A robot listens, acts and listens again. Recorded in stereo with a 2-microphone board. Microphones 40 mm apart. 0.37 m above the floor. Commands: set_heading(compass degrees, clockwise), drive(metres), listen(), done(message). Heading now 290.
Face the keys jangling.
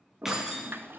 set_heading(320)
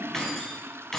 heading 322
set_heading(312)
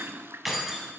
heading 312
done("Facing the keys jangling.")